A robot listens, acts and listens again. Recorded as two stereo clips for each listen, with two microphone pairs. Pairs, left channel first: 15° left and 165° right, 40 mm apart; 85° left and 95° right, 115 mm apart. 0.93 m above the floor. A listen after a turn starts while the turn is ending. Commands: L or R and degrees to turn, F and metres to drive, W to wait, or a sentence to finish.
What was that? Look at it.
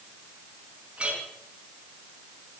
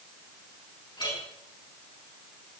L135
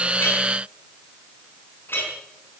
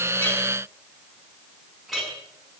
Found it: a clink, straight ahead.